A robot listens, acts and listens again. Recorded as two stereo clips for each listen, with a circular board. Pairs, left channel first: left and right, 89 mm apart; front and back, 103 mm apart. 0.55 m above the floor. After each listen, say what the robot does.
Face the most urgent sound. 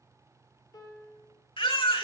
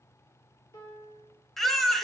Turn 90° left.
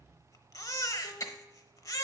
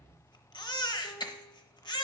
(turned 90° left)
Turn 40° left.
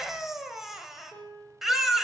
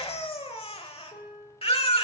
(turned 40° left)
Found it: a baby crying, straight ahead, under 1 m away.